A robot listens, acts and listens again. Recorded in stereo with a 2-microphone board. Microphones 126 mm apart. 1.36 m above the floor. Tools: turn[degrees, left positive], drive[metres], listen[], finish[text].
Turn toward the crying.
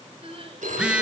Thought: The crying: about 45° right or 135° right.
Action: turn[-45]
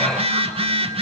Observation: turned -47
Action: listen[]
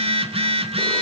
Action: listen[]
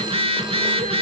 Action: finish[I heard crying, but can't make it out now. It was about straight ahead or 85° right.]